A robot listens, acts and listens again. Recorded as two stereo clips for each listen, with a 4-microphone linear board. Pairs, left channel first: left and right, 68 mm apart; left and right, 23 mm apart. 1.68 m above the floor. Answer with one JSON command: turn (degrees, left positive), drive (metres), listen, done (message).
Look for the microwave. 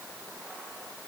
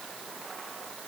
{"listen": true}
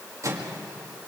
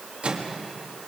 {"turn": -50}
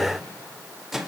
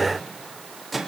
{"done": "Facing the microwave, 2 to 4 m away."}